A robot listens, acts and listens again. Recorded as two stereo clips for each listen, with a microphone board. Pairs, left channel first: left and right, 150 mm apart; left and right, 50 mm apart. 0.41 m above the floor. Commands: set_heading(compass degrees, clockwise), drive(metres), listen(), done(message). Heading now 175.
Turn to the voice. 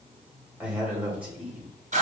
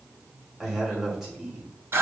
set_heading(205)
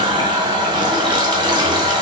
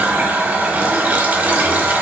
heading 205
listen()
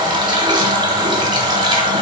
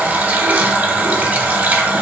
listen()
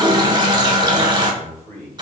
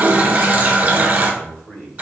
set_heading(185)
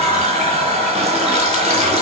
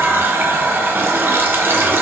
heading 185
listen()
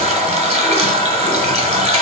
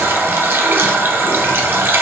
listen()
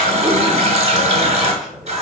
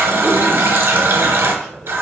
done("Found it: a man speaking, straight ahead.")